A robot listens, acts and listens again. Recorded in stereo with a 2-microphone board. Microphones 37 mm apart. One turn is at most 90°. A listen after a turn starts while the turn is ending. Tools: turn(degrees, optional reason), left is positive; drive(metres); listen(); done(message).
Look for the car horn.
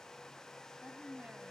listen()
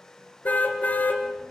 turn(degrees=45, reason="The car horn: about 45° left or 135° left.")
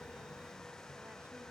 listen()
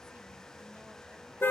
turn(degrees=85, reason="So it is at 85° left.")
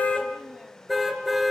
done("Found it: a car horn, straight ahead.")